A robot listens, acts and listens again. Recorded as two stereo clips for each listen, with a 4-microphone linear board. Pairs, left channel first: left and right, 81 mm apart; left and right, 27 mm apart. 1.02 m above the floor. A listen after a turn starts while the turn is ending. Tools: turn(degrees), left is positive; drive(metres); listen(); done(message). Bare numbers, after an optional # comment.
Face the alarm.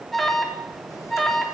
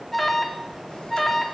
turn(30)
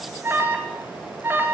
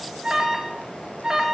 # So it is at 30° right.
turn(-30)
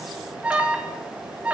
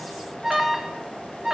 # The alarm is now 15° right.
turn(-15)
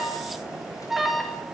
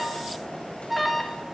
done("Found it: an alarm, straight ahead, over 4 m away.")